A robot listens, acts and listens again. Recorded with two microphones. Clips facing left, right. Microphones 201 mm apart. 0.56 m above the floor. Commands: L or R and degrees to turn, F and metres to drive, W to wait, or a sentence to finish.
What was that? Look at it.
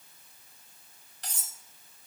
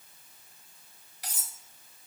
R30
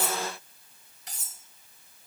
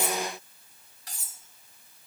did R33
L25
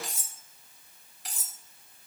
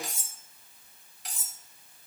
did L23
Facing the cutlery clinking.